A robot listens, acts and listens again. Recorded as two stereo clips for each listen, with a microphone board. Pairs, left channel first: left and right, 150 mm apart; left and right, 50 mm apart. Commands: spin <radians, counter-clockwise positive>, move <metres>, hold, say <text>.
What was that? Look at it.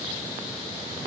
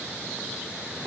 hold
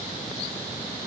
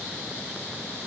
hold
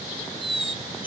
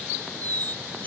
spin 0.61
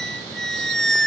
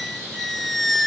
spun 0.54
say Facing the squeak.